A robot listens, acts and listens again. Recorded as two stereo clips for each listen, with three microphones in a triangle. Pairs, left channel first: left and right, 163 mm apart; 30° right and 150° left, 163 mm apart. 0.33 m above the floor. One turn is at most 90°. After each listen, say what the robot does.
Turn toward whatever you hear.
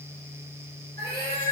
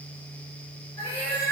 Turn 90° right.
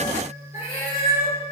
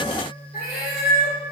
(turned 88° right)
Turn 25° right.
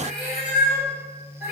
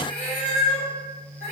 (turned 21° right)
Facing the cat meowing.